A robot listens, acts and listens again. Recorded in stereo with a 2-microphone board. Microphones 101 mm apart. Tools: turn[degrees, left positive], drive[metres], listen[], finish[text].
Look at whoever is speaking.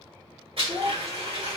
Thought: The child speaking: about 30° right or 150° right.
Action: turn[-30]
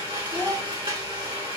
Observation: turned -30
Thought: So it is at 115° right.
Action: turn[-115]
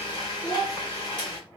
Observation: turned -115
Thought: The child speaking is now 10° left.
Action: turn[10]
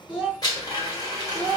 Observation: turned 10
Action: finish[Found it: a child speaking, straight ahead.]